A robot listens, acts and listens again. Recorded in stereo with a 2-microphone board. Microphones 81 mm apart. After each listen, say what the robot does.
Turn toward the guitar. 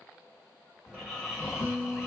Turn 65° right.
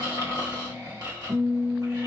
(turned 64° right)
Turn 50° right.
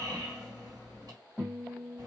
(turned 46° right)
Facing the guitar.